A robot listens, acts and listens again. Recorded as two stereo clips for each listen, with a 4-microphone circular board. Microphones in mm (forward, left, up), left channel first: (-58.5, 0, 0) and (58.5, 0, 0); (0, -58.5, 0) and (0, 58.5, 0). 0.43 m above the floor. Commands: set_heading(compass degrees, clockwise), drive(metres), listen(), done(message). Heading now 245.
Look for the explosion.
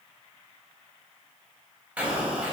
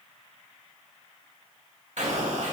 set_heading(165)
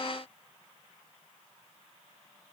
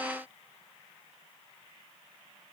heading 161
done("Facing where the explosion came from. I can't hear it now.")